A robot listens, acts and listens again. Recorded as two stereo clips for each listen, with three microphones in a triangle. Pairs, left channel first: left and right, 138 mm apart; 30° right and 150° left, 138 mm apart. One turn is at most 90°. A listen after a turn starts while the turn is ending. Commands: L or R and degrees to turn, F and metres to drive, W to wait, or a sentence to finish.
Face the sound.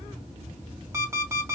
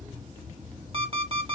R90
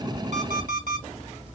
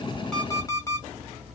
R90
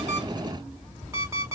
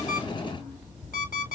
R20
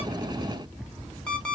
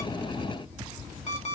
Facing the alarm clock.